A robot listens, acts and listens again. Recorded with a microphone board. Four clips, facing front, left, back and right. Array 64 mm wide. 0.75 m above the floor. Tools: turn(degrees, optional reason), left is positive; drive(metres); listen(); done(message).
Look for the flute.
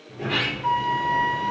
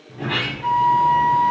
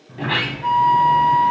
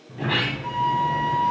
turn(degrees=115, reason="The flute: 115° left.")
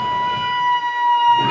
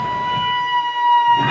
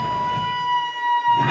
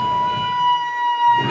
turn(degrees=50, reason="The flute is now 50° left.")
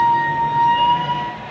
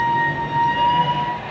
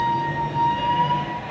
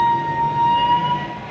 turn(degrees=15, reason="The flute is now 15° left.")
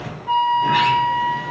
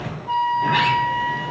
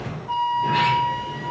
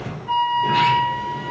done("Found it: a flute, straight ahead, 2 to 4 m away.")